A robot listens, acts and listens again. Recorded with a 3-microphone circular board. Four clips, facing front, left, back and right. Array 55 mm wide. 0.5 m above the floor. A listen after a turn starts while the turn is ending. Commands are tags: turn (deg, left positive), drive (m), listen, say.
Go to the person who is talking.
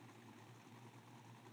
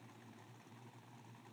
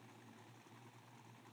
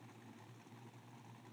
<listen/>
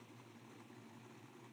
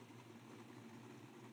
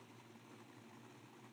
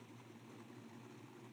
<listen/>
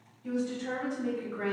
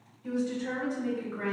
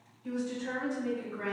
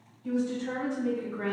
<turn deg="60"/>
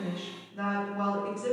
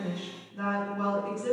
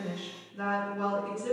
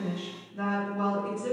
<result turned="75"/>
<turn deg="-15"/>
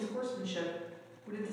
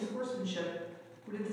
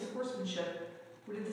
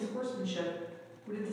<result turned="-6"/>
<drive m="1.0"/>
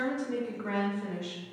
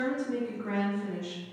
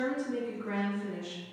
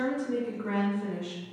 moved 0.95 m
<turn deg="-15"/>
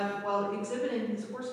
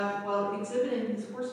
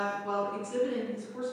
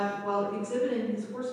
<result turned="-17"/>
<drive m="1.0"/>
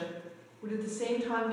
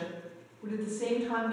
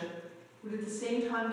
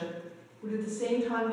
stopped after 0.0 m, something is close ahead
<turn deg="10"/>
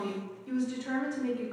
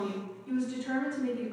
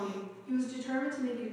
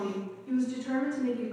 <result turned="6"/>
<say>I am next to the woman speaking.</say>